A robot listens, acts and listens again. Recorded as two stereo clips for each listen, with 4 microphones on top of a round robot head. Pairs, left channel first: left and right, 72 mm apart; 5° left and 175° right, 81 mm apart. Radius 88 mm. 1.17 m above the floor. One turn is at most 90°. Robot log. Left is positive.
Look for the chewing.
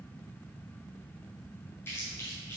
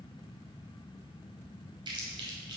note: The chewing: 155° left.
cmd yaw +90
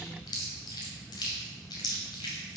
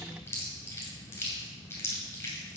note: The chewing is now 65° left.
cmd yaw +65
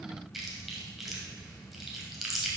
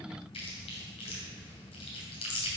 end: Found it: chewing, straight ahead.